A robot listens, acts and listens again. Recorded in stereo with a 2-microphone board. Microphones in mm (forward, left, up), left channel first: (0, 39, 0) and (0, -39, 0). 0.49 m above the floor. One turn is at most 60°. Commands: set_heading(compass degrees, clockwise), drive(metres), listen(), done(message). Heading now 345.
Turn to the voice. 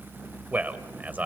set_heading(5)
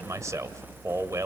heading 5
set_heading(65)
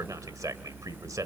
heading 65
set_heading(120)
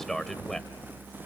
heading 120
done("Facing the man speaking, 1 to 2 m away.")